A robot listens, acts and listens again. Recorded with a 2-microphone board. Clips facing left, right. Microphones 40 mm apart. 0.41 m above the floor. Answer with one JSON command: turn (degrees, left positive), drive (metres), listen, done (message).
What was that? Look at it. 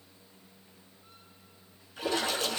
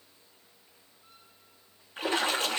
{"turn": -40}
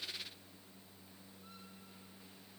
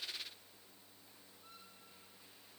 {"listen": true}
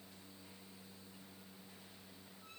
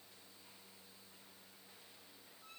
{"done": "I heard a splash, but can't make it out now. It was about straight ahead or 100° right."}